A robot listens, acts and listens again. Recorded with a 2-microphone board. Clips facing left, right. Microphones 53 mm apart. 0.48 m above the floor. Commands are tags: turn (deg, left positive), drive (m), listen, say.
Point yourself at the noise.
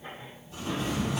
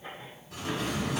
<turn deg="-65"/>
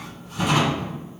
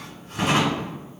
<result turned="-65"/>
<turn deg="-50"/>
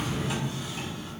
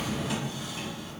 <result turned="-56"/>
<say>Found it: a drawer, straight ahead.</say>